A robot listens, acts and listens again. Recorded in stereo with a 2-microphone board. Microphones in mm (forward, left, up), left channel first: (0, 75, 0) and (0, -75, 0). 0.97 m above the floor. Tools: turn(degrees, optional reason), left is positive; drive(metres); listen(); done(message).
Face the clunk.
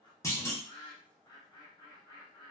turn(degrees=20, reason="The clunk: about 20° left or 160° left.")
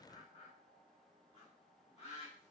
listen()
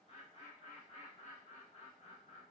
done("I heard a clunk, but can't make it out now. It was about straight ahead or 140° left.")